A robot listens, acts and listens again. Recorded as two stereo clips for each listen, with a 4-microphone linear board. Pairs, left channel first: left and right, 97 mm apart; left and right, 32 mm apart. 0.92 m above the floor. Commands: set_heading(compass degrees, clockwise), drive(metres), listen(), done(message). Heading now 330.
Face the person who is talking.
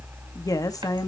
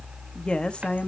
set_heading(295)
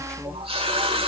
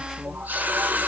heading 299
listen()
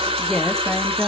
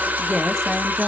done("Facing the woman speaking.")